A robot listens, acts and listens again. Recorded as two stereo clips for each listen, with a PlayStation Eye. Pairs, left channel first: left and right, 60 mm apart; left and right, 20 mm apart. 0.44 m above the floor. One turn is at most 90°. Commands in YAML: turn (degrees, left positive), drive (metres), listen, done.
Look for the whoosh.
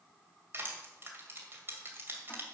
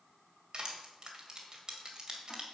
listen: true
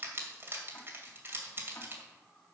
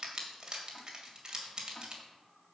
listen: true
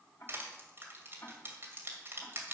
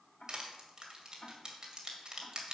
done: "I can't make out a whoosh to turn to."